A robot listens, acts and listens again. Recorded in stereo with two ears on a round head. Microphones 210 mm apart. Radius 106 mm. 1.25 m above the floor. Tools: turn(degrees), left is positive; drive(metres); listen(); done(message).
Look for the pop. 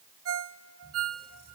listen()
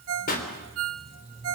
turn(degrees=35)
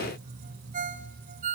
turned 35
listen()
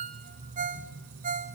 done("I heard a pop, but can't make it out now. It was about straight ahead or 110° left.")